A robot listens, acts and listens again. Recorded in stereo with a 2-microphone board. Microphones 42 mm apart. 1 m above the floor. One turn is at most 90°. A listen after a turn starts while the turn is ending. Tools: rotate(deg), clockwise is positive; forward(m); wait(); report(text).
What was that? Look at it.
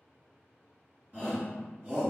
rotate(45)
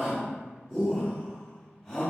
report("Found it: a shout, straight ahead, 1 to 2 m away.")